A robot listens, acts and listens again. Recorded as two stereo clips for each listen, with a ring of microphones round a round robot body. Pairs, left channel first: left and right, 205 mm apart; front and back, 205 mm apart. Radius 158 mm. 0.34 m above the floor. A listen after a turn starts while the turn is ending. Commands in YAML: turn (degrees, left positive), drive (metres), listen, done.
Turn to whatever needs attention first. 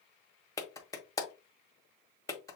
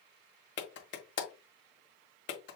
listen: true
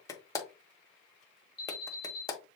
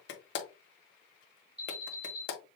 turn: -155
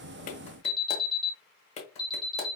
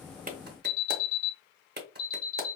turn: -25
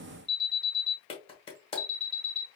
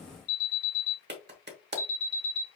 turn: -20
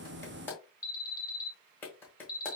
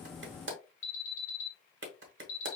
done: "Found it: an alarm, straight ahead, 2 to 4 m away."